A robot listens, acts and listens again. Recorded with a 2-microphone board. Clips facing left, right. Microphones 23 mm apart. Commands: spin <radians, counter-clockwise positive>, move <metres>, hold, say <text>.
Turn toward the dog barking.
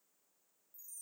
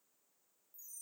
hold
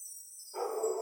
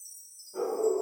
spin 0.61
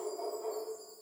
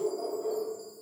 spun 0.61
say Facing the dog barking, 1 to 2 m away.